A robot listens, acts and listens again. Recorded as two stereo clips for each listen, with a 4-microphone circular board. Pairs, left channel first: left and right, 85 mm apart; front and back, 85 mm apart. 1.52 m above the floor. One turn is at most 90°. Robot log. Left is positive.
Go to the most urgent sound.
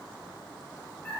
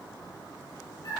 cmd idle
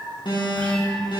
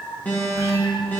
note: The alarm: 70° left.
cmd yaw +70
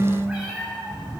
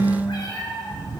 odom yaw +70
cmd idle
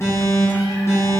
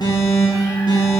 note: The alarm is now 35° left.
cmd yaw +35
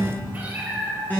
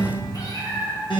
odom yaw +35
note: The alarm is now 20° left.
cmd yaw +20
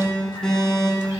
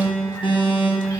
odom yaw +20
note: The alarm is now 10° left.
cmd yaw +10
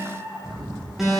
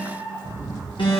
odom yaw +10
cmd fwd 1.0
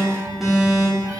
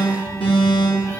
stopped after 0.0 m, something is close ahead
end: Blocked. The alarm is further on, straight ahead.